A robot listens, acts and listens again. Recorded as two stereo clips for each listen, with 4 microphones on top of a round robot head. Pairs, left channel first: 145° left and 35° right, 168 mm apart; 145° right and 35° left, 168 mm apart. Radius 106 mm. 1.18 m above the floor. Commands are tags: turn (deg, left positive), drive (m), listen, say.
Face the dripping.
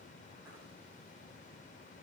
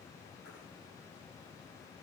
<listen/>
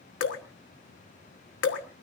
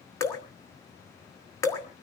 <turn deg="140"/>
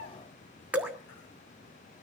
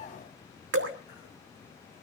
<turn deg="45"/>
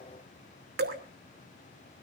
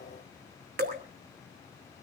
<say>Found it: dripping, straight ahead.</say>